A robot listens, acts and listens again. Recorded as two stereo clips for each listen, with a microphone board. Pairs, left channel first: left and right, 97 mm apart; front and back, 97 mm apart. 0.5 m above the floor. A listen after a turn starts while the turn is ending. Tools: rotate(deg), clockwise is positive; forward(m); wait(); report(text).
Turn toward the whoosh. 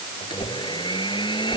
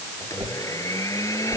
rotate(-125)
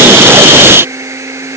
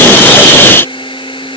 wait()
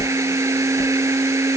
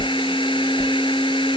rotate(-40)
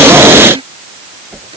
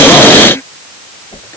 report("Found it: a whoosh, straight ahead.")